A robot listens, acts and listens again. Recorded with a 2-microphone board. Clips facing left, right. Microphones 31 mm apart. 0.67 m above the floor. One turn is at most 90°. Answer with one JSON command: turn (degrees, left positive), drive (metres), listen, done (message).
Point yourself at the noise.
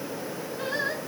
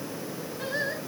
{"turn": 90}
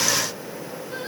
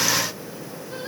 {"listen": true}
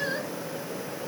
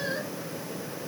{"turn": 10}
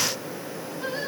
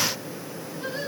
{"turn": 10}
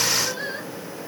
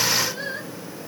{"done": "Found it: singing, straight ahead."}